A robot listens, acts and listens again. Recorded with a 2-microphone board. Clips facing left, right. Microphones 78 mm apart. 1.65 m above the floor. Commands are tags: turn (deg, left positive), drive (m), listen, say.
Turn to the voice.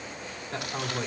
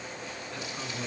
<turn deg="45"/>
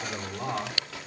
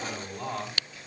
<say>Facing the man speaking, over 4 m away.</say>